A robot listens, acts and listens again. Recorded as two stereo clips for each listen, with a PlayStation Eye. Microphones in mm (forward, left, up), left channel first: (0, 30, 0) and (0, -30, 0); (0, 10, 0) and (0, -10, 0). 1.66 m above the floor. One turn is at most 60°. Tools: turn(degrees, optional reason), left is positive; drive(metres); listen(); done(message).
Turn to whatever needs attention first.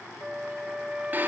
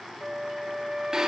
listen()
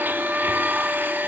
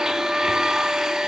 listen()
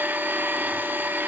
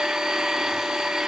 done("I can't make out anything urgent, only a blender and a flute.")